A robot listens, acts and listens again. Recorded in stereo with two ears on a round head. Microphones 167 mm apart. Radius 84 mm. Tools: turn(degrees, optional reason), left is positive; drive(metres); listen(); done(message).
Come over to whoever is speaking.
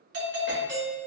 listen()
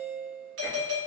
listen()
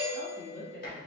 turn(degrees=30)
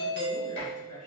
listen()
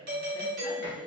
listen()
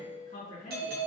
turn(degrees=140, reason="So it is at 140° left.")
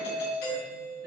listen()
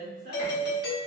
turn(degrees=-40, reason="The woman speaking is now 40° right.")
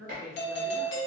drive(metres=1.0)
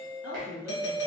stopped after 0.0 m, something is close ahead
done("Blocked. The woman speaking is further on, straight ahead.")